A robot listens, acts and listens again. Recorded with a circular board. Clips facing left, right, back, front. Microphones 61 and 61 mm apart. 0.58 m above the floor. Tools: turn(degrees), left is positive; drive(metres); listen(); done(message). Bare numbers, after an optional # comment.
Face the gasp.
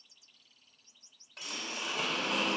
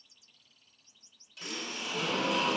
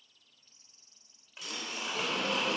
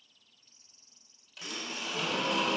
# The gasp: 55° right.
turn(-55)
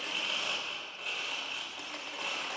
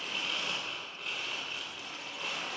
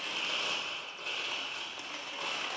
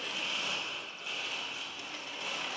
done("Facing where the gasp came from. I can't hear it now.")